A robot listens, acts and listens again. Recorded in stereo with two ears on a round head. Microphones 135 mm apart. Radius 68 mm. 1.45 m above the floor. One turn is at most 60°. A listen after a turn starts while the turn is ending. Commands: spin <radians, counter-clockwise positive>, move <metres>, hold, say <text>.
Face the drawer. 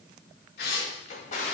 spin 0.87
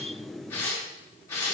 hold
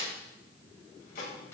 spin 1.05
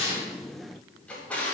spin 0.17
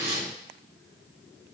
hold
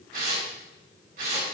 hold
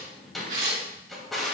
say Facing the drawer.